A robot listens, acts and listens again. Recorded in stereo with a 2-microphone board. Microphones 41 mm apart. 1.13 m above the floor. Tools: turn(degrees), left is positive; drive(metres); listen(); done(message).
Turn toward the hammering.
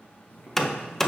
turn(degrees=30)
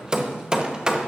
turn(degrees=-20)
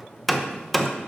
done("Found it: hammering, straight ahead.")